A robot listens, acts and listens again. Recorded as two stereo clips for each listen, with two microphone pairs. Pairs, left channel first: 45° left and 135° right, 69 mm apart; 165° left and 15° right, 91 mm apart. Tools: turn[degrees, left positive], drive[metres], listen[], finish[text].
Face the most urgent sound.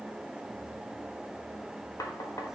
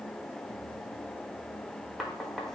Action: listen[]
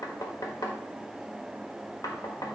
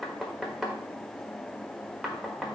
Action: listen[]
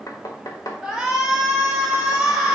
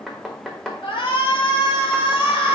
Thought: The shout: 140° left.
Action: turn[140]
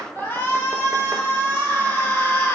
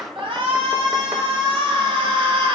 Thought: The shout is now 15° right.
Action: turn[-15]
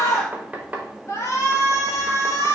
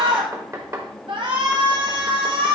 Action: finish[Facing the shout, 2 to 4 m away.]